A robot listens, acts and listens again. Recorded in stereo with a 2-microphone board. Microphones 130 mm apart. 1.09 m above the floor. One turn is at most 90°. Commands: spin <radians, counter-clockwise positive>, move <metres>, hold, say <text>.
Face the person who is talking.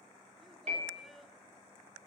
spin 0.52
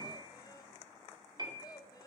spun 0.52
spin 1.57
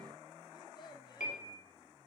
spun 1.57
spin 0.61
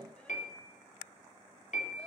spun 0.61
hold
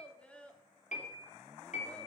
spin 0.17
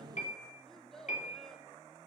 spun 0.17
say Found it: a child speaking, straight ahead, 1 to 2 m away.